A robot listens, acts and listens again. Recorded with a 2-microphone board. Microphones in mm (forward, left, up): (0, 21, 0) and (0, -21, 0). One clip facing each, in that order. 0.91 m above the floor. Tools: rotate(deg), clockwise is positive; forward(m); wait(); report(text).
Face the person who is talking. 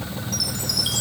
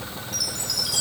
wait()
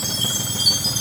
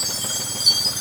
wait()
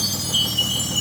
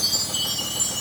report("I can't make out anyone speaking, only a chime.")